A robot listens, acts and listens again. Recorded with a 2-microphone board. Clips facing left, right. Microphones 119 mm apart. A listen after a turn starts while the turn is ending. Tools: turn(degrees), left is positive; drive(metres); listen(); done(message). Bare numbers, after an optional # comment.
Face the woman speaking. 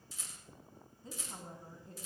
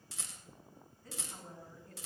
# The woman speaking: about 25° left or 155° left.
turn(25)
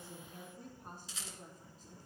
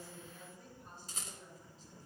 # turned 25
# So it is at 135° left.
turn(135)
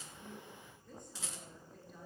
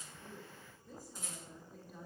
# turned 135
done("Found it: a woman speaking, straight ahead.")